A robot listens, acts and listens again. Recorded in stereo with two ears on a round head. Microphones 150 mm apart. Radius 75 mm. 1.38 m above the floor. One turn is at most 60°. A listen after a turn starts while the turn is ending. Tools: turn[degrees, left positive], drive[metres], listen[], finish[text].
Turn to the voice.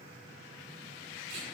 Action: listen[]
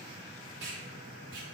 Action: listen[]
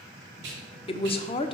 Thought: The woman speaking: about 35° left or 145° left.
Action: turn[35]
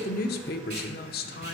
Thought: So it is at 105° left.
Action: turn[60]
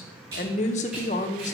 Thought: The woman speaking is now 45° left.
Action: turn[45]
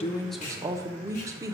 Thought: The woman speaking is now 20° right.
Action: turn[-20]
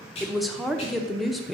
Action: finish[Facing the woman speaking.]